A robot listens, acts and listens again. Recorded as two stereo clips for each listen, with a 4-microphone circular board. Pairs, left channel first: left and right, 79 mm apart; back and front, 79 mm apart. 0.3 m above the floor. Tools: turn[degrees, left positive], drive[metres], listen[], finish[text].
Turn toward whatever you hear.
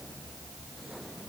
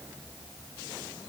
Action: listen[]
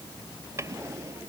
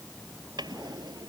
Thought: The drawer: 35° right.
Action: turn[-35]
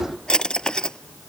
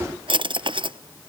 Thought: The drawer is now 10° left.
Action: turn[10]
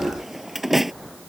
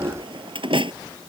Action: finish[Found it: a drawer, straight ahead.]